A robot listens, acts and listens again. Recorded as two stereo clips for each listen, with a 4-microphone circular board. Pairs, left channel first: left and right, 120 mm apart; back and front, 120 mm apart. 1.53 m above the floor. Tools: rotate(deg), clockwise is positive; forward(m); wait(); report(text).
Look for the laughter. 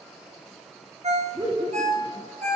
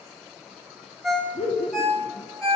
rotate(145)
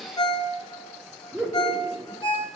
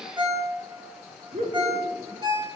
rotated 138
report("Facing the laughter.")